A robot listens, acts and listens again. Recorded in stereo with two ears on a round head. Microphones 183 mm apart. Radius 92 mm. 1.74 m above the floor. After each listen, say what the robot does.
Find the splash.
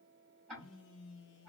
Keep listening.
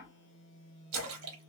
Turn 90° right.
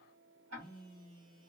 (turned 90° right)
I heard a splash from this way, but can't make it out now.